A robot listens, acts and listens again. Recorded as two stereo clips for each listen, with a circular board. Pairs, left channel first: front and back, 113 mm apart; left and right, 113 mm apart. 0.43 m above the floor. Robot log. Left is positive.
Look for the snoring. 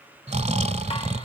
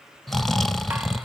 note: The snoring: straight behind.
cmd yaw +180
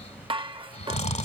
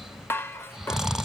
end: Facing the snoring.